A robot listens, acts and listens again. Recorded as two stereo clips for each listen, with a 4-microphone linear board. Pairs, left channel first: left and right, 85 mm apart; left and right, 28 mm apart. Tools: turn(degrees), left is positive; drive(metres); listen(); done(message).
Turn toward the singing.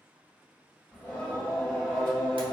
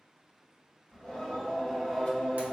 turn(degrees=30)
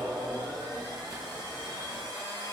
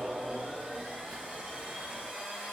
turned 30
turn(degrees=30)
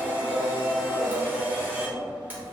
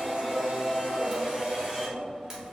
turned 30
turn(degrees=-30)
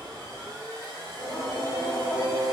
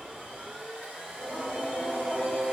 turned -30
turn(degrees=-145)
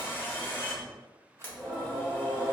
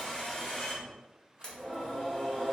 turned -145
turn(degrees=15)
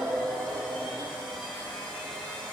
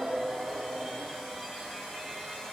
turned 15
done("Found it: singing, straight ahead.")